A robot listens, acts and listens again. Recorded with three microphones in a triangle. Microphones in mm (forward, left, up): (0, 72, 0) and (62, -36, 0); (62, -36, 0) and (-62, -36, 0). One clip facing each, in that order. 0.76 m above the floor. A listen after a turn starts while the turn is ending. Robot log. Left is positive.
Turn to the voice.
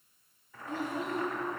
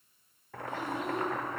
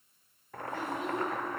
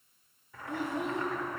note: The child speaking: 165° left.
cmd yaw +165
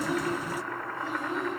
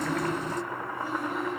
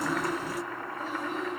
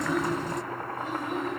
note: The child speaking is now 50° left.
cmd yaw +50
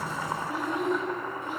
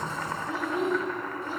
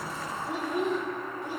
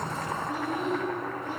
end: Found it: a child speaking, straight ahead, 2 to 4 m away.